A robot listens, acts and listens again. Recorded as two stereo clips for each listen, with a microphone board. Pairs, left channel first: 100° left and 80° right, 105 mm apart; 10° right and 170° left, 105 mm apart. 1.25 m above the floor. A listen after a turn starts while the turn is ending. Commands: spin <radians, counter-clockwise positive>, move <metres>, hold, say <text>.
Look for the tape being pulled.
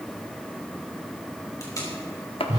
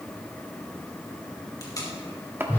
spin 0.79
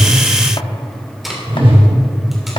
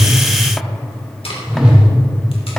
spin 0.17
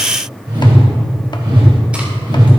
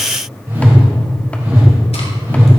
hold
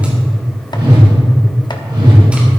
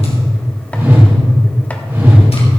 hold
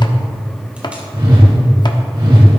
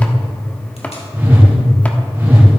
say Facing where the tape being pulled came from. I can't hear it now.